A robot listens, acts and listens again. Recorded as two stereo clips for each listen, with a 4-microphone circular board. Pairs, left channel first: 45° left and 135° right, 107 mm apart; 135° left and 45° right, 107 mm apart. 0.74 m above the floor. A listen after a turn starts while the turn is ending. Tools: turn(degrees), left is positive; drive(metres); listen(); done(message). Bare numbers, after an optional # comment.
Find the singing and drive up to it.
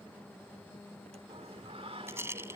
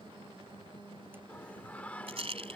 # The singing: 150° right.
turn(-150)
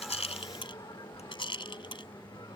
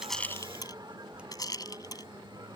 drive(1.0)
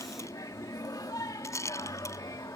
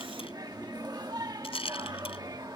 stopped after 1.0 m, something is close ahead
done("Arrived at the singing, straight ahead.")